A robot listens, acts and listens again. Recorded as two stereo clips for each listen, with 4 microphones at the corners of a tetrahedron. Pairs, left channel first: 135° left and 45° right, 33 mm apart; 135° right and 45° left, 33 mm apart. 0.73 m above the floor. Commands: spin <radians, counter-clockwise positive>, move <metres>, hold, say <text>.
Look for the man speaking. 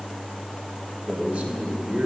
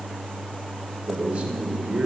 spin -0.17
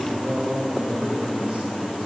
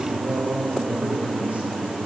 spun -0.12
say Found it: a man speaking, straight ahead, 2 to 4 m away.